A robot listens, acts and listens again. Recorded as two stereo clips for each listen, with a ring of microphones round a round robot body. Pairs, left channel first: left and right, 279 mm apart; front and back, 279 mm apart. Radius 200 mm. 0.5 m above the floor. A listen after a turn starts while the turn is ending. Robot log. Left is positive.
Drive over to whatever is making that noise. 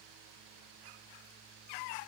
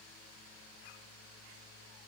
cmd idle
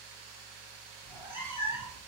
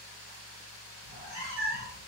note: The cat meowing: 125° left.
cmd yaw +125
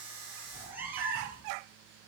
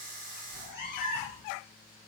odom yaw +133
cmd fwd 1.0
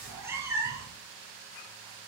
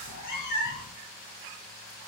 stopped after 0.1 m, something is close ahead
note: The cat meowing is now 10° right.
cmd yaw -10
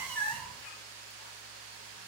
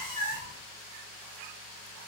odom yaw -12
end: Something is in my way. I am facing the cat meowing but have not reached it.